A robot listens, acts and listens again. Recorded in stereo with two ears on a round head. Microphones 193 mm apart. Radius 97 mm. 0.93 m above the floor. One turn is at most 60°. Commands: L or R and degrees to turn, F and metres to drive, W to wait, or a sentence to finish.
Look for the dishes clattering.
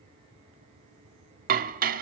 R40
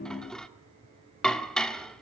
Facing the dishes clattering, 1 to 2 m away.